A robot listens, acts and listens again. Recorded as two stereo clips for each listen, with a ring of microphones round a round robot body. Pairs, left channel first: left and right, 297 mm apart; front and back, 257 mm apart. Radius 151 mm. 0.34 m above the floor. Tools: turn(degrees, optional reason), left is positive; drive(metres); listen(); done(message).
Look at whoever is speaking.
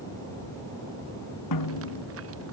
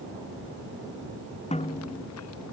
listen()
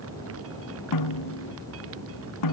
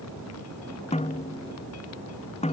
listen()
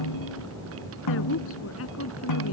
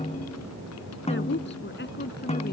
turn(degrees=45, reason="The woman speaking: 45° left.")
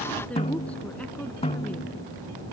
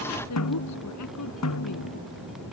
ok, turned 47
done("Facing the woman speaking.")